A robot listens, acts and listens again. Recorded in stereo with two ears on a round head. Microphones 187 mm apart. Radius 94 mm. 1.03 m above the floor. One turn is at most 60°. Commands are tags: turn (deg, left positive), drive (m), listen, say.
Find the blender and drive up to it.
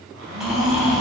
<turn deg="-60"/>
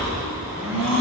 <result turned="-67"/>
<turn deg="-10"/>
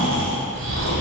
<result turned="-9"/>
<listen/>
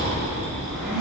<drive m="1.0"/>
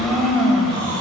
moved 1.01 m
<drive m="1.0"/>
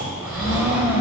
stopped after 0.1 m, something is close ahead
<turn deg="-10"/>
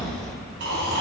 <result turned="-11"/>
<listen/>
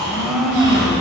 <say>Arrived at the blender, straight ahead.</say>